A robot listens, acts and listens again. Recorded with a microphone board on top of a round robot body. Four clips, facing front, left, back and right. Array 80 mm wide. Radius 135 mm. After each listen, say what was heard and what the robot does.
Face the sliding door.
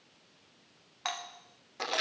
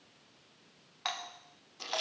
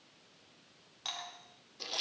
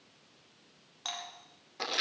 Keep listening.
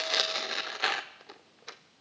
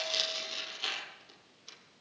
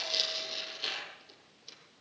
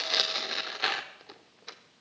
Keep listening.
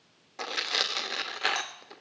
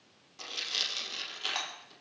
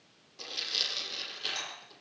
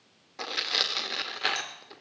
I can't make out a sliding door, only a doorbell and tearing paper.